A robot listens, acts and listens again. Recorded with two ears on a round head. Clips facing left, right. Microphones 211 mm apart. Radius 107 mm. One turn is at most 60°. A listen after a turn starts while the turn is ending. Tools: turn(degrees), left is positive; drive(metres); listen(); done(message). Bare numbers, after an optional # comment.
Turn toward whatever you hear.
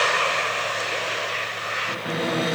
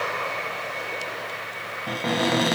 # The cupboard door: about 70° right or 110° right.
turn(-60)
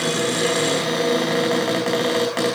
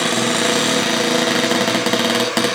# So it is at 50° right.
turn(-50)
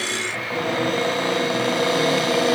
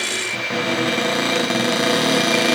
# The cupboard door is now 30° right.
turn(-30)
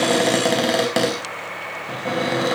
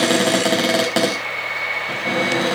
done("Found it: a cupboard door, straight ahead.")